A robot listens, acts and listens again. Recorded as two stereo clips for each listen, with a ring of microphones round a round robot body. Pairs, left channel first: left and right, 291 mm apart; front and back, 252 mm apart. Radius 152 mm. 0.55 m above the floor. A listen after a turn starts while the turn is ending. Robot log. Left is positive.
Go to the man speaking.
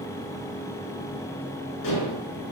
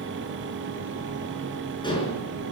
cmd idle
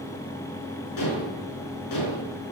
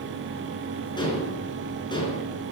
cmd idle
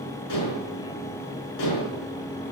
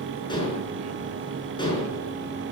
end: I can't make out a man speaking, only dishes clattering.